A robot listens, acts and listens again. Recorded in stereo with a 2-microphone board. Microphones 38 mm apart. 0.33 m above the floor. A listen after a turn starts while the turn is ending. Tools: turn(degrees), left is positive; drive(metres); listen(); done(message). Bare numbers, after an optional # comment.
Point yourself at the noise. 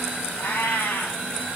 turn(90)
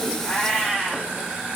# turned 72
# So it is at 15° left.
turn(15)
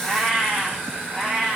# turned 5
done("Facing the cat meowing.")